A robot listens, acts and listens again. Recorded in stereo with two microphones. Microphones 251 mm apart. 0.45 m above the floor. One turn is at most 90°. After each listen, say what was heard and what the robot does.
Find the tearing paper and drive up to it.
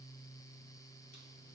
Keep listening.
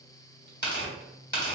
The tearing paper: about 45° left or 135° left. Turn 45° left.
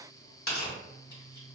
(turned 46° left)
So it is at 80° left. Turn 80° left.
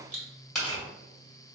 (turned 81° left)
Drive 1.0 m forward.
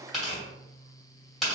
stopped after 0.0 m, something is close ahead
Something is in my way. I am facing the tearing paper but have not reached it.